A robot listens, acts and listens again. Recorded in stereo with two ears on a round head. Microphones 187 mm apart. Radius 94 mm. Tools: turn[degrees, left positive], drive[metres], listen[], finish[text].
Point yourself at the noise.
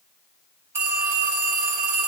Action: turn[-30]
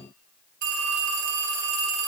Thought: So it is at 140° right.
Action: turn[-140]
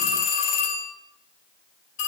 Thought: The phone ringing is now 35° left.
Action: turn[35]
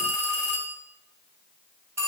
Thought: The phone ringing is now 10° right.
Action: turn[-10]
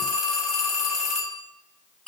Action: finish[Facing the phone ringing.]